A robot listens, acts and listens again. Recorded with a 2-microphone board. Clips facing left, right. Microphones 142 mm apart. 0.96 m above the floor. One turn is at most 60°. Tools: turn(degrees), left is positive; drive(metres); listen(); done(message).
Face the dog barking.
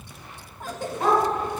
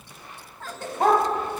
turn(degrees=-55)
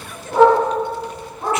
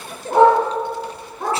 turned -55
turn(degrees=-60)
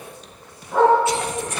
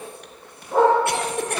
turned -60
turn(degrees=-40)
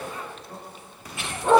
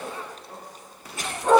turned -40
done("Found it: a dog barking, straight ahead.")